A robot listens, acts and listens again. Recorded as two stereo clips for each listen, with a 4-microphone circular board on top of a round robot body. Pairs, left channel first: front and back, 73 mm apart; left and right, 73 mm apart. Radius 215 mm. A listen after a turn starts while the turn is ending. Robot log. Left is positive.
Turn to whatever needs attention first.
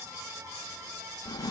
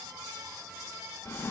cmd idle
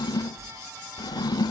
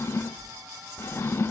cmd idle
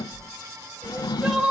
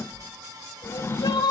note: The crying: 100° left.
cmd yaw +100
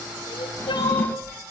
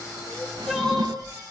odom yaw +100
end: Facing the crying.